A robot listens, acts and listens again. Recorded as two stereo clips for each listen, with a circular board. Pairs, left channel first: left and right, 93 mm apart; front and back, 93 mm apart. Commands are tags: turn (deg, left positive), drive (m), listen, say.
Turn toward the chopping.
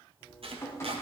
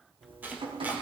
<turn deg="-105"/>
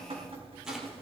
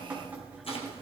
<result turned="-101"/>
<listen/>
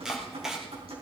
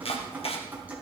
<say>Facing the chopping.</say>